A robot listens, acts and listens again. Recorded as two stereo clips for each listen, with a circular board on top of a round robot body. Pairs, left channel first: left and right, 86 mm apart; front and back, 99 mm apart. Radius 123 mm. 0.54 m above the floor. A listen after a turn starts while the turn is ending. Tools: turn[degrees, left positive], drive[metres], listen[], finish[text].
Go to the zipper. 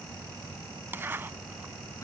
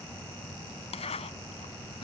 Thought: The zipper: 25° right.
Action: turn[-25]
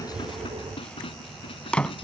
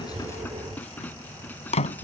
Thought: The zipper is now 10° left.
Action: turn[10]
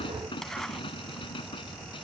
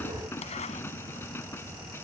Action: drive[1.0]
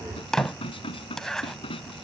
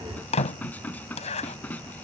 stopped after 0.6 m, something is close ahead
Action: finish[Something is in my way. I am facing the zipper but have not reached it.]